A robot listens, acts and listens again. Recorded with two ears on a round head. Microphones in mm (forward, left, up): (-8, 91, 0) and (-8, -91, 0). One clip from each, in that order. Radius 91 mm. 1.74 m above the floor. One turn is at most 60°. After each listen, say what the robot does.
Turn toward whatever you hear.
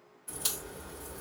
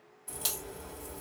Turn 30° right.
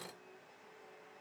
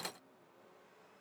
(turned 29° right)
Keep listening.
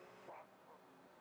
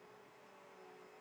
I heard a crack, but can't make it out now. It was about 20° left or 140° right.